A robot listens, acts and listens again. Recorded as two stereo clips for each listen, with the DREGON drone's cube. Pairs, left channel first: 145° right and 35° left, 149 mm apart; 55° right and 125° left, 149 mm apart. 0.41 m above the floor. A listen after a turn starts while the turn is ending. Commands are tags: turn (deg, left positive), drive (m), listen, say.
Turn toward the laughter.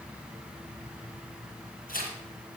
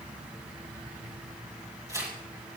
<listen/>
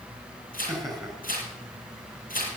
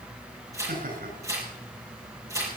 <turn deg="125"/>
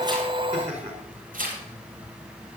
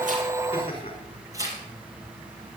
<say>Facing the laughter.</say>